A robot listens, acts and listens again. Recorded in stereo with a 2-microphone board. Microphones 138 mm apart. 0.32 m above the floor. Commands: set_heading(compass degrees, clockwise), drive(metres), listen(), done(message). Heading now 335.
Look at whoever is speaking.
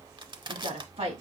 set_heading(20)
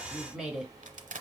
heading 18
done("Found it: a woman speaking, straight ahead.")